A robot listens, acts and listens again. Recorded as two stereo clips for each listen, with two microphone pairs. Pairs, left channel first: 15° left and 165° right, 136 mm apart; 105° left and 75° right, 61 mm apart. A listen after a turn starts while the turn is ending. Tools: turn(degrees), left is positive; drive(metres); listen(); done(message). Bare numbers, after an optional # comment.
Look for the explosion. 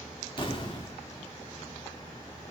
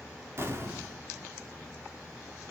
# The explosion: 35° right.
turn(-35)
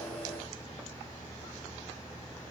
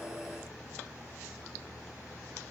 done("Facing where the explosion came from. I can't hear it now.")